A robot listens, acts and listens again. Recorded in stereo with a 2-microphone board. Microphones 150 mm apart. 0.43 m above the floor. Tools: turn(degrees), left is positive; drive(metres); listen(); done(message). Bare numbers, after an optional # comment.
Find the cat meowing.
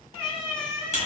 # The cat meowing: about 30° left or 150° left.
turn(30)
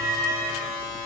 done("Facing the cat meowing.")